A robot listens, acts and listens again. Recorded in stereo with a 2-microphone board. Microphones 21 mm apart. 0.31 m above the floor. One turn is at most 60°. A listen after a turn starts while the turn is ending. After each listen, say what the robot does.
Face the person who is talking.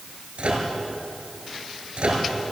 Keep listening.
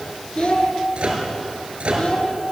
Turn 60° left.
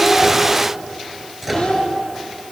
Turn 55° left.
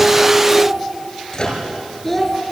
Turn 10° left.
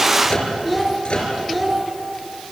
Facing the child speaking, 2 to 4 m away.